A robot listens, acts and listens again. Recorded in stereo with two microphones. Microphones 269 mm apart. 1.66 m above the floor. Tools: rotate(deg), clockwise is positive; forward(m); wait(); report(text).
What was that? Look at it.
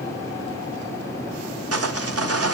rotate(60)
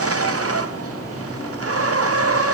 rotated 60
rotate(60)
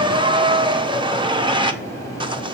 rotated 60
rotate(20)
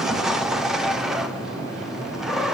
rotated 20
report("Facing the sawing, under 1 m away.")